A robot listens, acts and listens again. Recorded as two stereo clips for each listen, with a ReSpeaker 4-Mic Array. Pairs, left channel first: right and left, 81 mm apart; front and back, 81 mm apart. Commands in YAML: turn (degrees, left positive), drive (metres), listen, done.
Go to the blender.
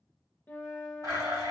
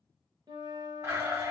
turn: 125
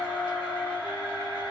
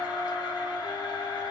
turn: -20
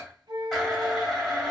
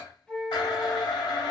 drive: 1.0
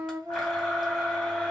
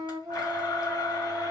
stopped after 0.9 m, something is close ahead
listen: true
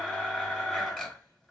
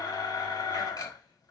done: "I am next to the blender."